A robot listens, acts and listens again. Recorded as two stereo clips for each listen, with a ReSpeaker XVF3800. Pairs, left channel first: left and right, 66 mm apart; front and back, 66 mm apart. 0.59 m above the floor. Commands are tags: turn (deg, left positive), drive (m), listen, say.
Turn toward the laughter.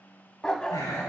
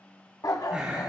<turn deg="110"/>
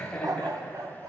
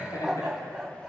<turn deg="20"/>
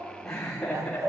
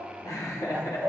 <turn deg="15"/>
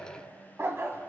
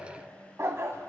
<listen/>
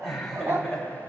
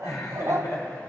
<say>Found it: laughter, straight ahead, over 4 m away.</say>